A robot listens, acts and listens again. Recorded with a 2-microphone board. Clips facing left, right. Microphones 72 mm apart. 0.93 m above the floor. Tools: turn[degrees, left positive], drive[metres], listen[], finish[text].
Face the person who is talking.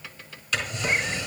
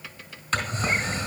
Action: listen[]
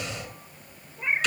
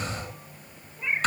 Action: listen[]
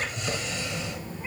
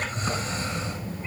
Thought: The child speaking: about 50° right or 130° right.
Action: turn[-50]
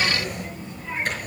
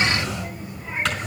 Thought: So it is at 10° right.
Action: turn[-10]
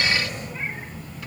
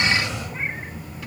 Thought: The child speaking is now 10° right.
Action: turn[-10]
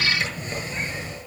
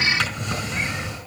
Action: finish[Facing the child speaking.]